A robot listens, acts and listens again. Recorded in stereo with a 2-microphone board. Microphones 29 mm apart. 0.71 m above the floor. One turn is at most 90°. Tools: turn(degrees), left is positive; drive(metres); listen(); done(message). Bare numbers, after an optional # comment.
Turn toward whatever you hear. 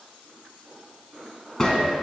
# The gunshot: about 15° left or 165° left.
turn(15)
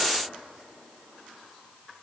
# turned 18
listen()
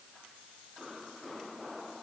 done("I heard a gunshot, but can't make it out now. It was about straight ahead or 145° left.")